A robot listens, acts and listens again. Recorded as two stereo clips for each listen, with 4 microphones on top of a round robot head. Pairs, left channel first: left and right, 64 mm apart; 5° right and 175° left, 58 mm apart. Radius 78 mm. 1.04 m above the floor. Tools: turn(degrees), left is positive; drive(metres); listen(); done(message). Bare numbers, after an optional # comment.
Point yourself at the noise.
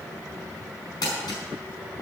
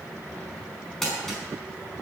# The crumpling: 80° left.
turn(80)
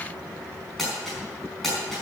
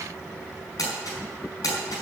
done("Found it: crumpling, straight ahead, over 4 m away.")